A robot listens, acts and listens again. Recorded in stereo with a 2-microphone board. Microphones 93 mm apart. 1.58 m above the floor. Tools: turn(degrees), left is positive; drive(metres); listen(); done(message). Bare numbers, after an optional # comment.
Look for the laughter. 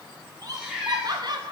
# The laughter: about 50° right or 130° right.
turn(-50)
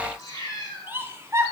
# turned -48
# So it is at 30° right.
turn(-30)
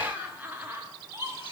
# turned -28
# The laughter is now 30° right.
turn(-30)
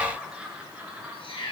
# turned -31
# The laughter is now 15° right.
turn(-15)
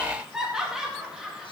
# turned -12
done("Found it: laughter, straight ahead, 1 to 2 m away.")